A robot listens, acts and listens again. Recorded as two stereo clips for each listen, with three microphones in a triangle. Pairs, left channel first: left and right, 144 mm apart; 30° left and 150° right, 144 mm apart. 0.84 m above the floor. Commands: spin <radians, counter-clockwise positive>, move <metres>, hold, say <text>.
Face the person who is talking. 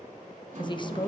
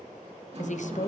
spin 0.70
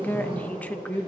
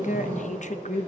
spin 0.26
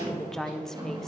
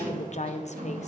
say Facing the woman speaking, under 1 m away.